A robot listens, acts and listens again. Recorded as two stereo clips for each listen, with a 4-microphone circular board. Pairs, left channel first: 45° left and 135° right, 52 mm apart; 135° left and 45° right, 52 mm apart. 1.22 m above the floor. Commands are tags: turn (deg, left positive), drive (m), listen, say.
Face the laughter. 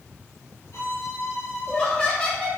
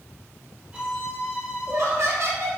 <turn deg="-20"/>
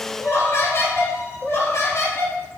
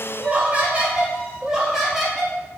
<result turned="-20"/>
<turn deg="45"/>
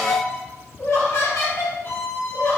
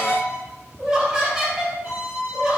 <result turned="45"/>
<turn deg="25"/>
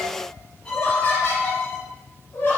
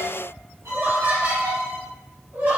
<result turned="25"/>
<say>Facing the laughter.</say>